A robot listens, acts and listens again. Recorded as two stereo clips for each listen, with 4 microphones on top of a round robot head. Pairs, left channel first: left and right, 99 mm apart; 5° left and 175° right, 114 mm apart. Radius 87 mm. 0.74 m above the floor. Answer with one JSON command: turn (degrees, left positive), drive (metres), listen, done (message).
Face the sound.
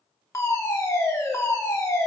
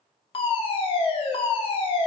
{"turn": 35}
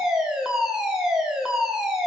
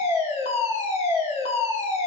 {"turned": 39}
{"done": "Facing the fire alarm, 2 to 4 m away."}